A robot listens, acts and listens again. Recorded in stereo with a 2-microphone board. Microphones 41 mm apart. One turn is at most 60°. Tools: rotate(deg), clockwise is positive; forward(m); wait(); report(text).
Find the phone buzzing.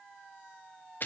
wait()
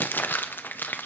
wait()
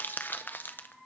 report("I can't make out a phone buzzing to turn to.")